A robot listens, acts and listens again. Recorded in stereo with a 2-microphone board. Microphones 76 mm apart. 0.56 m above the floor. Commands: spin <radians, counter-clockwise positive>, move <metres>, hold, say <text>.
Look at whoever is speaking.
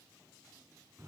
hold
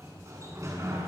hold
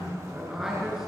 spin -0.52
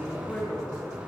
spin 0.35
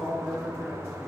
say Found it: a man speaking, straight ahead.